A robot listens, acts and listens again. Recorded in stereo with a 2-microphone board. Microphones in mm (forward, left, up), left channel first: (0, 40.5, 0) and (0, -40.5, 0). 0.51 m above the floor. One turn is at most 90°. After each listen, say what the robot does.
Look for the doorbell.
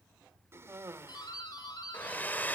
Turn 55° left.
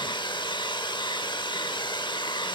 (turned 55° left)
Keep listening.
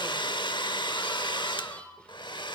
Turn 15° left.
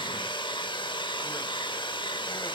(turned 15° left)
Keep listening.
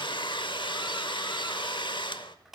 Found it: a doorbell, straight ahead, over 4 m away.